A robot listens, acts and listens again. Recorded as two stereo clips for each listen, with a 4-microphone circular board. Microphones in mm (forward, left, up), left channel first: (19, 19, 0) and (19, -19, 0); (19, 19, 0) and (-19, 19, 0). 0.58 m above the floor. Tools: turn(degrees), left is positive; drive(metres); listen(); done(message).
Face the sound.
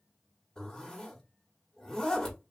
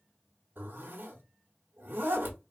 turn(degrees=155)
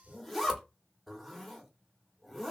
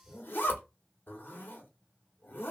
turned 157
done("Facing the zipper, 1 to 2 m away.")